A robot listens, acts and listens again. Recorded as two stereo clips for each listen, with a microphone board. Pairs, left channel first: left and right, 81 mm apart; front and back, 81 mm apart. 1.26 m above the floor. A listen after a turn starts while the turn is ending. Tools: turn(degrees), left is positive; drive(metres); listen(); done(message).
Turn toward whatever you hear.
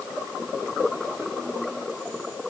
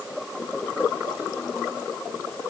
listen()
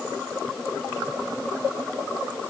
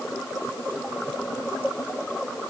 listen()
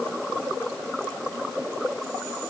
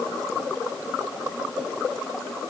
done("I can't make out anything.")